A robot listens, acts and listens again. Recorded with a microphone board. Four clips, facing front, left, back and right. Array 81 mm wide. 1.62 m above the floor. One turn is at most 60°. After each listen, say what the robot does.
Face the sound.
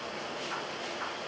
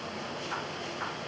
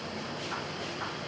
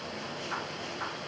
Keep listening.
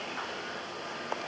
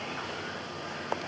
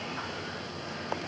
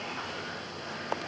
Keep listening.
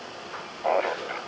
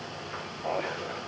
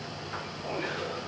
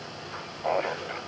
Turn 15° right.
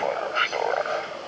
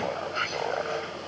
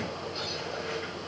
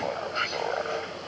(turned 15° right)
Found it: laughter, straight ahead.